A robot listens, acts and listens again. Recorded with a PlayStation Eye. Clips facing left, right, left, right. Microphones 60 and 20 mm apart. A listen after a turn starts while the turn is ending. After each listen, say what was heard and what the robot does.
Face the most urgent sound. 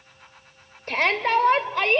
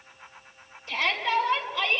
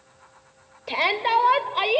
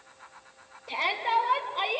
The shout: about 50° left or 130° left. Turn 50° left.
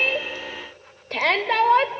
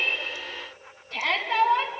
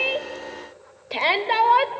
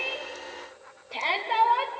So it is at 75° left. Turn 75° left.
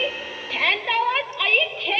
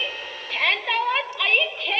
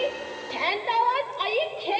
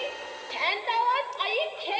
Facing the shout.